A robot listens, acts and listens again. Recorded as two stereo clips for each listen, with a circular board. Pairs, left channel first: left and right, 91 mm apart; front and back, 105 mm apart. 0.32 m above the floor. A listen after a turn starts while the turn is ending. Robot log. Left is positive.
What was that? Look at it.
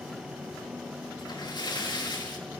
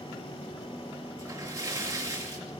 note: The splash: 120° left.
cmd yaw +120
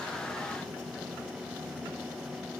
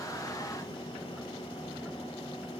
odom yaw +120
end: I heard a splash from this way, but can't make it out now.